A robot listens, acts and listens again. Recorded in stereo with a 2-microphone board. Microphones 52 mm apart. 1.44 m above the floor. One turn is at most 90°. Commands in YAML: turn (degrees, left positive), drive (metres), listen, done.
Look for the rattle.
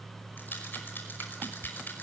turn: 40
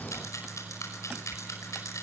turn: 90
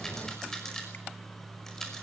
turn: 10
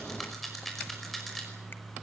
done: "Facing the rattle."